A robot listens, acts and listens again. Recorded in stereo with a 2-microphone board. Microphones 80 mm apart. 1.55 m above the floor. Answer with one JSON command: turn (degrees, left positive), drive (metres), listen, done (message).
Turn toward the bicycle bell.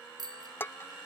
{"turn": -60}
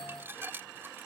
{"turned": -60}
{"listen": true}
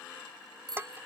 {"turn": -60}
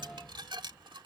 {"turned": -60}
{"listen": true}
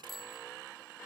{"done": "Found it: a bicycle bell, straight ahead."}